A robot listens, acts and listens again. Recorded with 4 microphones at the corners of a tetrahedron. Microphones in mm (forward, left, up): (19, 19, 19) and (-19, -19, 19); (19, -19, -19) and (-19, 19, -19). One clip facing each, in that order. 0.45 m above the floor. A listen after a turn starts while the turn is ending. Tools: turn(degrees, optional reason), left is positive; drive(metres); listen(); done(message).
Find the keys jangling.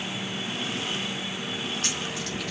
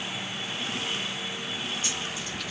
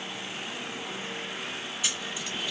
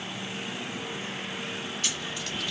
turn(degrees=30, reason="The keys jangling: 30° left.")
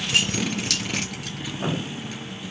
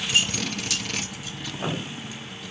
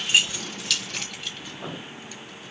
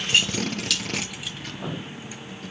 turn(degrees=45, reason="The keys jangling is now 45° left.")
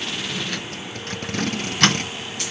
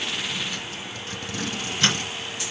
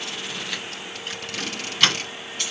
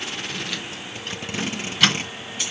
turn(degrees=50, reason="The keys jangling is now 50° left.")
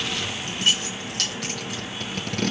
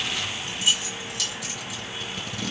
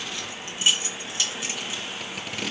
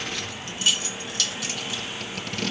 turn(degrees=20, reason="The keys jangling is now 20° left.")
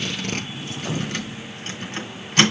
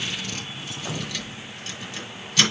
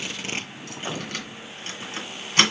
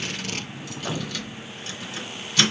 done("Facing the keys jangling, 2 to 4 m away.")